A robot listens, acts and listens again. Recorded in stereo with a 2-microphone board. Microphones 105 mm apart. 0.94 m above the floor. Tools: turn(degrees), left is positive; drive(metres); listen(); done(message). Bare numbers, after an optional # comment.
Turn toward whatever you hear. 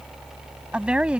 turn(-30)
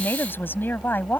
# So it is at 20° left.
turn(20)
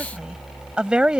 # The woman speaking is now 10° right.
turn(-10)
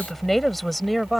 done("Facing the woman speaking.")